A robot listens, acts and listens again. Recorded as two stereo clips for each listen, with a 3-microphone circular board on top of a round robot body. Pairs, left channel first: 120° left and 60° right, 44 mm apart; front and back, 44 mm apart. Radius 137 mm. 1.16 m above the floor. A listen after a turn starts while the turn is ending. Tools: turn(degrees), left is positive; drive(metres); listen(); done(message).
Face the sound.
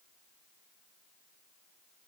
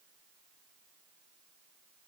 listen()
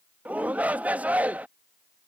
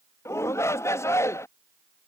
done("Facing the shout.")